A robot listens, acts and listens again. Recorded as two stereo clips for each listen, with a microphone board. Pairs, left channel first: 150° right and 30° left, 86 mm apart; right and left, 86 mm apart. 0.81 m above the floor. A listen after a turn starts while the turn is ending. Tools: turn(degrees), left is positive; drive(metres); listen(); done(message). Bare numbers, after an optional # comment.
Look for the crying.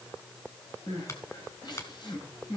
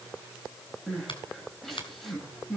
# The crying: 175° right.
turn(-175)
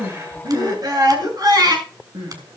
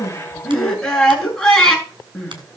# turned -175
done("Facing the crying.")